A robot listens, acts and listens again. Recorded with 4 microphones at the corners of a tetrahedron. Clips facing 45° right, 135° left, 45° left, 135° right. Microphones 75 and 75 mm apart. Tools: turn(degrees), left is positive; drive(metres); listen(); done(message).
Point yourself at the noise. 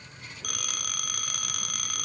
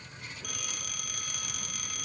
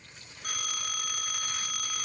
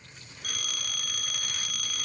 turn(degrees=-20)
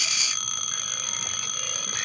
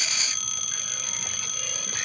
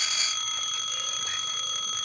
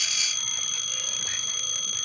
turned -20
done("Facing the phone ringing, 1 to 2 m away.")